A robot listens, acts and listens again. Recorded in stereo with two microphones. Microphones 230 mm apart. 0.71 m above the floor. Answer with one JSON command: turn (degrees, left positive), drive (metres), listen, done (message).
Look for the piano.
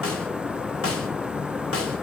{"listen": true}
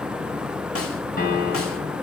{"turn": 45}
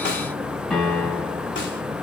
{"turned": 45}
{"done": "Found it: a piano, straight ahead, 2 to 4 m away."}